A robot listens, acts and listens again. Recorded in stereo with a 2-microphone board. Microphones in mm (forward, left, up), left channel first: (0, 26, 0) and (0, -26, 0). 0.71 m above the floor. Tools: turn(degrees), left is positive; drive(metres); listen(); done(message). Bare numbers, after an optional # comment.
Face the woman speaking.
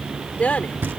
# The woman speaking: about 30° left or 150° left.
turn(30)
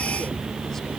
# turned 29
listen()
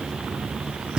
listen()
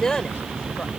# So it is at 15° left.
turn(15)
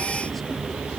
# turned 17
listen()
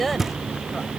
done("Facing the woman speaking.")